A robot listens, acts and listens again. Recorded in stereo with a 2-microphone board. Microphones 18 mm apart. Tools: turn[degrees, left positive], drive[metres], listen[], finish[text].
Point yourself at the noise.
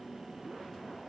Action: listen[]
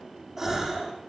Thought: The gasp: about 20° right or 160° right.
Action: turn[-20]
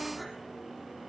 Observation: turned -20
Action: listen[]
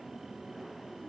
Action: finish[I heard a gasp, but can't make it out now. It was about straight ahead or 140° right.]